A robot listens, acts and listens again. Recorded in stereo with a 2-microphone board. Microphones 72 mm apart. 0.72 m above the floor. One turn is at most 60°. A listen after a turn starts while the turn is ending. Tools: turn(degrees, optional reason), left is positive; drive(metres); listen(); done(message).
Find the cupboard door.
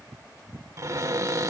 turn(degrees=-50, reason="The cupboard door: about 50° right or 130° right.")
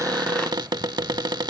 turn(degrees=-60, reason="So it is at 80° right.")
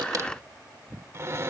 turn(degrees=-40, reason="The cupboard door is now 40° right.")
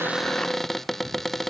done("Found it: a cupboard door, straight ahead.")